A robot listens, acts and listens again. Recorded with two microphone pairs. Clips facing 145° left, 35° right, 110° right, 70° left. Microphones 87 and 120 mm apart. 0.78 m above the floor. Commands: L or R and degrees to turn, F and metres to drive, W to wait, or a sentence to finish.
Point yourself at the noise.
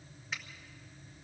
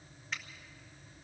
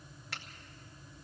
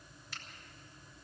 R125
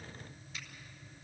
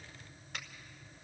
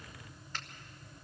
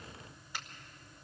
R10
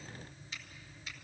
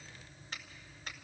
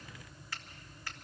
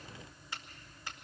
Found it: a finger snap, straight ahead.